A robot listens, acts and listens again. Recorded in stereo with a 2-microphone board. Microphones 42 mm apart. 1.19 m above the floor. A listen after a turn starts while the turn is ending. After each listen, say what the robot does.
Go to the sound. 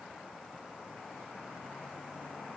Keep listening.
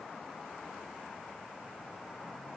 Keep listening.
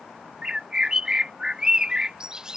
Turn 15° right.
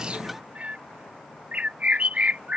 Turn 145° right.
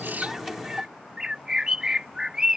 Turn 20° right.
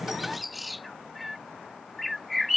Drive 1.0 m forward.
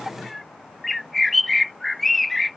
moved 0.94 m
Drive 1.0 m forward.
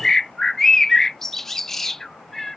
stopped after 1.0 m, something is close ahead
Arrived at the bird, straight ahead.